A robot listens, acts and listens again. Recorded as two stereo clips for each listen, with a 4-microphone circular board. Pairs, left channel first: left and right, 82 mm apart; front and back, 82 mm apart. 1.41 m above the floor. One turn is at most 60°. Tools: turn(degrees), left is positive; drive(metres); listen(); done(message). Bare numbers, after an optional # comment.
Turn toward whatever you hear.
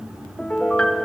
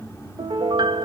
# The piano: 165° left.
turn(60)
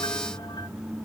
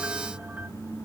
# Nothing new. It was at 105° left.
turn(60)
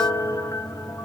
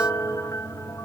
# The piano is now 45° left.
turn(45)
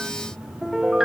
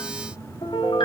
done("Facing the piano, 2 to 4 m away.")